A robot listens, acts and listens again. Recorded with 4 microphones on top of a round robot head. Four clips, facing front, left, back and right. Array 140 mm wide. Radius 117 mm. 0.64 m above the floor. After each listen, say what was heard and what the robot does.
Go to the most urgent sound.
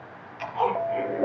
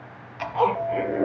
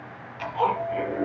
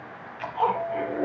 The alarm: 10° left. Turn 10° left.
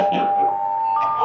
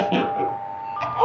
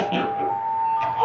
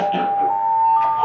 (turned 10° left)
Drive 1.0 m forward.
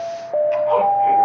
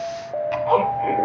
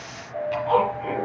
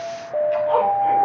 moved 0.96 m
Drive 1.0 m forward.
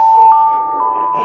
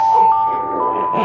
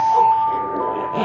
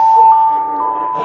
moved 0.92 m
Drive 1.0 m forward.
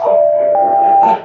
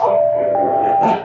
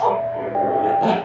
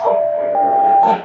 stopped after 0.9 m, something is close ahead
Arrived at the alarm, straight ahead.